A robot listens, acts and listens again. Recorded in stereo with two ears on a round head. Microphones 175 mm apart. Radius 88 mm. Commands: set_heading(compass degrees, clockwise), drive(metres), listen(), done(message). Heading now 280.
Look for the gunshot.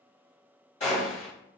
set_heading(245)
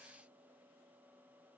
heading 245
listen()
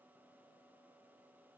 done("I heard a gunshot, but can't make it out now. It was about straight ahead or 110° left.")